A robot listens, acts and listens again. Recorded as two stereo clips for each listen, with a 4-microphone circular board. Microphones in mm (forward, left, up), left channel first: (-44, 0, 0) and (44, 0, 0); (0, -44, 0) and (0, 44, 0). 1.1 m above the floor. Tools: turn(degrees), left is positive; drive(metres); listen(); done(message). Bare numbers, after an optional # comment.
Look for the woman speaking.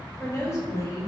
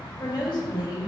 # The woman speaking: 135° right.
turn(-135)
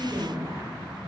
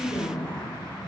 # The woman speaking is now 55° right.
turn(-55)
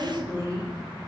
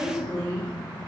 # The woman speaking is now 40° right.
turn(-40)
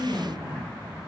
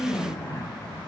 # The woman speaking is now 35° right.
turn(-35)
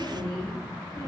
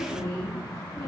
done("Facing the woman speaking.")